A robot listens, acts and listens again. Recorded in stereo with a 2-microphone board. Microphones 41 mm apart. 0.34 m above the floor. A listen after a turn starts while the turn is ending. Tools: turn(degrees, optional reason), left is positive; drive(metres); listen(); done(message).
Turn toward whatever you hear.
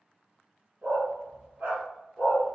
turn(degrees=-45, reason="The dog barking: about 45° right or 135° right.")
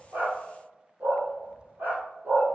turn(degrees=-95, reason="So it is at 95° right.")
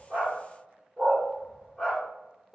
turn(degrees=-15, reason="The dog barking is now 15° right.")
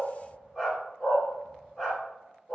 done("Found it: a dog barking, straight ahead.")